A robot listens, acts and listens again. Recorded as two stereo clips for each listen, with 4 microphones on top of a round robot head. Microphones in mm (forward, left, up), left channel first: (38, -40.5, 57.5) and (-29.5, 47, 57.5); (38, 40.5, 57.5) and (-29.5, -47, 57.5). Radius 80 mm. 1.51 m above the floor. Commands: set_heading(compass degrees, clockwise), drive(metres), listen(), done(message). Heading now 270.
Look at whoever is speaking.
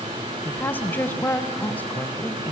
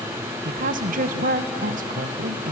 set_heading(40)
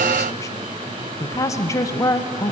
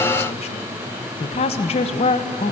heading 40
set_heading(25)
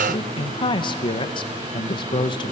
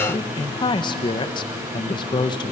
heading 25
done("Found it: a woman speaking, straight ahead, 1 to 2 m away.")